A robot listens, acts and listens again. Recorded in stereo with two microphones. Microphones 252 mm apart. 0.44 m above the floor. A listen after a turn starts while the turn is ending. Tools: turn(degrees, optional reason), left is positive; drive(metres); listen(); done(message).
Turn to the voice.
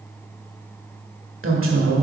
turn(degrees=-55, reason="The woman speaking: about 55° right or 125° right.")
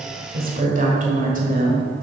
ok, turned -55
turn(degrees=-40, reason="So it is at 40° right.")
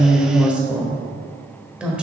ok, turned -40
done("Facing the woman speaking.")